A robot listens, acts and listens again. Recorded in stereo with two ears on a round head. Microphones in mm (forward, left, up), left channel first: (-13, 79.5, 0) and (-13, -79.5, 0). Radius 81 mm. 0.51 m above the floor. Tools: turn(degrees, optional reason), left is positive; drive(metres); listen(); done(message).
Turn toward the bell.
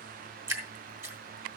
listen()
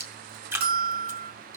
turn(degrees=-60, reason="The bell: about 60° right or 120° right.")
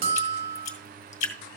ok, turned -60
turn(degrees=-55, reason="So it is at 55° right.")
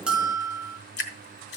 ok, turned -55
done("Found it: a bell, straight ahead, 1 to 2 m away.")